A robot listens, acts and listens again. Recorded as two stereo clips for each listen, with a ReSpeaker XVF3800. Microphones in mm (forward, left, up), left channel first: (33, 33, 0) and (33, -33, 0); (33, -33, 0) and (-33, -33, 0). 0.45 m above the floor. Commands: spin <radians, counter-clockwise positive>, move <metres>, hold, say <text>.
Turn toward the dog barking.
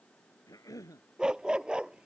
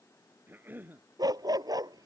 spin -2.88
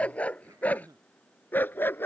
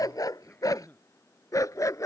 spin 0.52
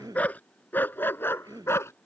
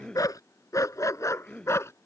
spin 0.70
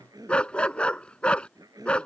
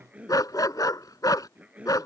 spin 0.26
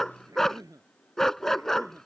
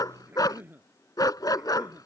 say Facing the dog barking.